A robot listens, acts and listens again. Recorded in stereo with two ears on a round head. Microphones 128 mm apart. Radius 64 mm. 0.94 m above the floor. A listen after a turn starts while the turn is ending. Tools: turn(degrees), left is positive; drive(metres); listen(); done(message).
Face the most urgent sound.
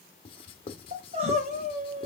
turn(degrees=-45)
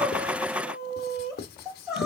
done("Found it: crying, straight ahead.")